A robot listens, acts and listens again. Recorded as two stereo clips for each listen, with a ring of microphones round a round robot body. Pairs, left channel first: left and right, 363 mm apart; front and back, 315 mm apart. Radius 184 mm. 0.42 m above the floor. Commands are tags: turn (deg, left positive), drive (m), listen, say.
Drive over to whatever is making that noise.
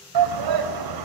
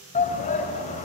<turn deg="-70"/>
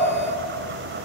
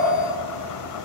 <listen/>
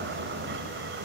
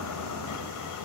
<listen/>
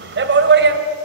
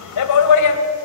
<turn deg="-30"/>
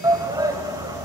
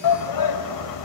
<turn deg="-10"/>
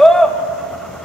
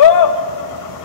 <drive m="1.0"/>
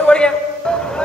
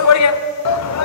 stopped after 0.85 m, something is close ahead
<say>I am next to the shout.</say>